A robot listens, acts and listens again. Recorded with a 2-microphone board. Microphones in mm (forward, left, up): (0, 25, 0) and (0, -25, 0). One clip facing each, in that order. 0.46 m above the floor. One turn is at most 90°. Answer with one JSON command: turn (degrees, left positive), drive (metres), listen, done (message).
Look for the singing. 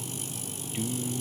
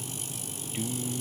{"turn": -30}
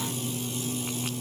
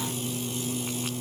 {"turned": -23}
{"turn": -90}
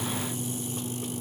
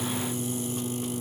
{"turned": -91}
{"turn": -70}
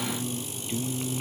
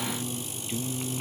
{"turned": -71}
{"done": "Found it: singing, straight ahead."}